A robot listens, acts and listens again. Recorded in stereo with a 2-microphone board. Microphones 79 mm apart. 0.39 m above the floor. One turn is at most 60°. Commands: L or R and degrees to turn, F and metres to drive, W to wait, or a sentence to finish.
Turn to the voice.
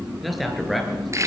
L30
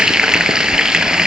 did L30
W
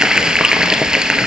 W
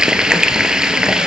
I heard a man speaking, but can't make it out now. It was about 30° right or 150° left.